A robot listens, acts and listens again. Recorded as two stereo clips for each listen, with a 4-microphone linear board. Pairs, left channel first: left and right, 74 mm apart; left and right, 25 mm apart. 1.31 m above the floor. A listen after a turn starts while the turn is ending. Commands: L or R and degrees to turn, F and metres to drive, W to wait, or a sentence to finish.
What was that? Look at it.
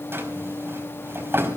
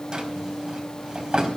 R30
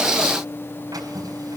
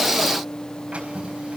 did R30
W
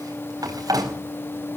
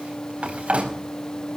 R115
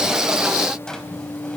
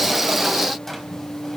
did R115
L10
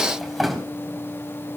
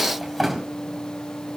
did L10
Facing the drawer, over 4 m away.